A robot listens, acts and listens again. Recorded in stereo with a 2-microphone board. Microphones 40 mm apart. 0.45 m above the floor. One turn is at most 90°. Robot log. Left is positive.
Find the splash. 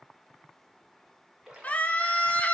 note: The splash: about 15° right or 165° right.
cmd yaw -15
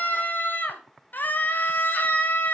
cmd idle
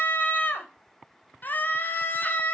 end: I heard a splash, but can't make it out now. It was about straight ahead or 150° right.